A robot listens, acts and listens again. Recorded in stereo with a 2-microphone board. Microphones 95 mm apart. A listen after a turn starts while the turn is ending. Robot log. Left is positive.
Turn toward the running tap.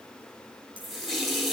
cmd yaw +30
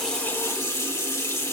note: So it is at 150° left.
cmd yaw +150
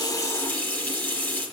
note: The running tap is now 15° left.
cmd yaw +15
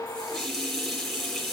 end: Facing the running tap, over 4 m away.